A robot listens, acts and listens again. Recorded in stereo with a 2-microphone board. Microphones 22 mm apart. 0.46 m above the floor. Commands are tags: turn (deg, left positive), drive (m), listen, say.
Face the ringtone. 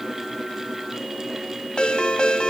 <turn deg="55"/>
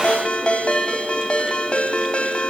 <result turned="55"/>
<turn deg="70"/>
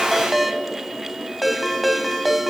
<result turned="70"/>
<say>Found it: a ringtone, straight ahead, 1 to 2 m away.</say>